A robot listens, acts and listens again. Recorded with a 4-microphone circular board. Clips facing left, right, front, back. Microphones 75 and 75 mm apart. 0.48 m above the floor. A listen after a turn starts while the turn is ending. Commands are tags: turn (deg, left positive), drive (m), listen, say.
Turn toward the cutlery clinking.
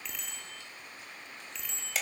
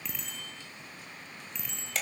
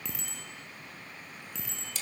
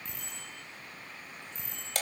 <listen/>
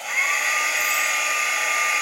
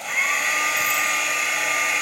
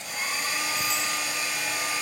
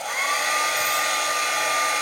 <listen/>
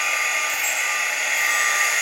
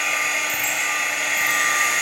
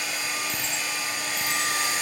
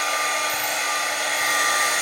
<say>I can't make out cutlery clinking to turn to.</say>